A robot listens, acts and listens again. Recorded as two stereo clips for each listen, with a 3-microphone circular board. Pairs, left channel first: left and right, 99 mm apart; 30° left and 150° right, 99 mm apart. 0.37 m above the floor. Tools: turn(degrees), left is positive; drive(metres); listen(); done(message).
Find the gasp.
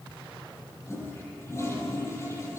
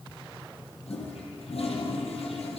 listen()
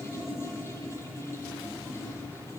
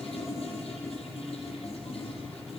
listen()
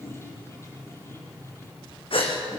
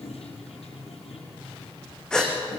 turn(degrees=110)
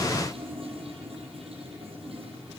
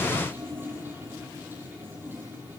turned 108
done("Facing where the gasp came from. I can't hear it now.")